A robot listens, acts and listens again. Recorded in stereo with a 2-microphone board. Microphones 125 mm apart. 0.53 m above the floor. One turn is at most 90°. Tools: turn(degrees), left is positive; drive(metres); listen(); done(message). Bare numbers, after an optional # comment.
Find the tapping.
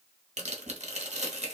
listen()
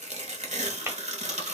# The tapping: about 20° right or 160° right.
turn(-20)
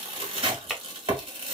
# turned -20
done("Found it: tapping, straight ahead.")